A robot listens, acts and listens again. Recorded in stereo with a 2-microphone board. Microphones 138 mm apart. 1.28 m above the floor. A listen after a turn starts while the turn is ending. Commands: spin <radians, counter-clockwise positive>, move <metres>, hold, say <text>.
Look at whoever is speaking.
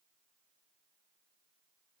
hold
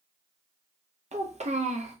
spin -0.96
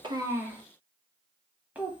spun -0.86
spin -0.17
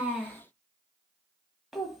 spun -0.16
say Facing the child speaking, under 1 m away.